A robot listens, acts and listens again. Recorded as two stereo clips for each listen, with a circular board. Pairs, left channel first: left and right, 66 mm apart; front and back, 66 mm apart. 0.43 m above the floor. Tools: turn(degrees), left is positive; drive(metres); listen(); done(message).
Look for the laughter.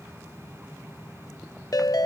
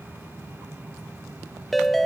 listen()
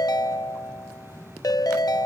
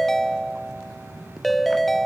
listen()
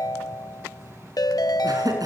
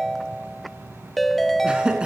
turn(degrees=-105)
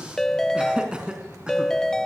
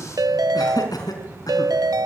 turn(degrees=-15)
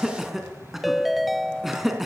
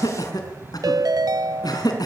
done("Facing the laughter.")